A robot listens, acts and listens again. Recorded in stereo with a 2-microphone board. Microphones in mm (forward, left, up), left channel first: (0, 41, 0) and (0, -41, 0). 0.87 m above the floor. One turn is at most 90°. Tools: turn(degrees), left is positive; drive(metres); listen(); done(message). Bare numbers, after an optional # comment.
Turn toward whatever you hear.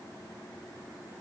listen()
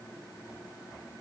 listen()
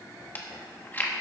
# The chewing: about 25° left or 155° left.
turn(25)
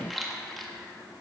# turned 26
done("Facing the chewing, 1 to 2 m away.")